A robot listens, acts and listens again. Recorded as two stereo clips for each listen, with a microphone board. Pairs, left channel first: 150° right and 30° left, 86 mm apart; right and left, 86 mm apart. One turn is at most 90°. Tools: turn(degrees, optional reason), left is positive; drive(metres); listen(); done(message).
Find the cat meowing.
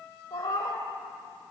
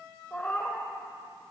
turn(degrees=-90, reason="The cat meowing: 155° right.")
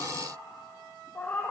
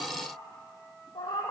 turn(degrees=-80, reason="The cat meowing is now 80° right.")
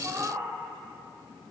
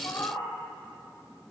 turn(degrees=-30, reason="The cat meowing is now 30° right.")
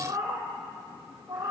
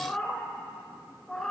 done("Facing the cat meowing, 2 to 4 m away.")